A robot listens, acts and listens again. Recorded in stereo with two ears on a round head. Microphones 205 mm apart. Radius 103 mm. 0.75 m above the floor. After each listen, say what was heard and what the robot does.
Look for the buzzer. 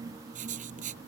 Keep listening.
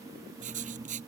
Keep listening.
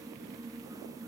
I can't make out a buzzer, only writing.